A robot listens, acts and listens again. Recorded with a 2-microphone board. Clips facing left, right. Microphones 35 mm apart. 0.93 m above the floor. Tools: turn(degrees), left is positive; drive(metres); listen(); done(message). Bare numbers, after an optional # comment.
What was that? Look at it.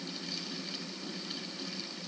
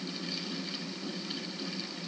listen()
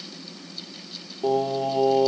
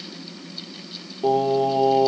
turn(-30)
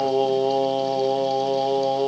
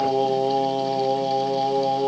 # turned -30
# So it is at 20° left.
turn(20)
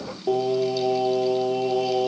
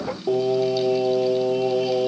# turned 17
done("Found it: singing, straight ahead.")